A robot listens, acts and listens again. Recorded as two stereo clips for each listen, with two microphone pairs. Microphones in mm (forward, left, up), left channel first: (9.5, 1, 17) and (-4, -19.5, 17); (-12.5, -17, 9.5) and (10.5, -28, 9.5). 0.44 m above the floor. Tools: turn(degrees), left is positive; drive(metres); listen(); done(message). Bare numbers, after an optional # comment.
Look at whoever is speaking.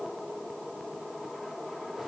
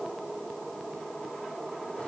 listen()
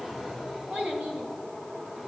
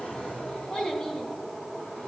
# The child speaking: 145° right.
turn(-145)
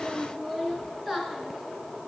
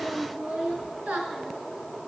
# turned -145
# The child speaking is now 30° right.
turn(-30)
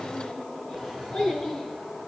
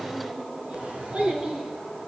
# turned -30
done("Facing the child speaking.")